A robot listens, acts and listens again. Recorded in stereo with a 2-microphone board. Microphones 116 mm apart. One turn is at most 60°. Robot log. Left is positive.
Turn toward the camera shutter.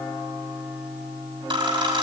note: The camera shutter: about 45° right or 135° right.
cmd yaw -45
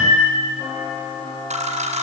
note: So it is at 90° right.
cmd yaw -60
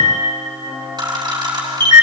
note: The camera shutter is now 35° right.
cmd yaw -35
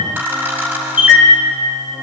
note: The camera shutter is now 15° right.
cmd yaw -15
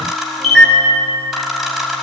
end: Found it: a camera shutter, straight ahead, over 4 m away.